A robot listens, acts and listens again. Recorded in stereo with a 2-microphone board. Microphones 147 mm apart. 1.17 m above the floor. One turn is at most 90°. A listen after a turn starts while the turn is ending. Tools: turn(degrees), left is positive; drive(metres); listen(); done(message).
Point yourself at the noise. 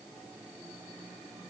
listen()
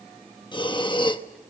turn(degrees=35)
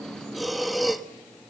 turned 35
done("Facing the breathing.")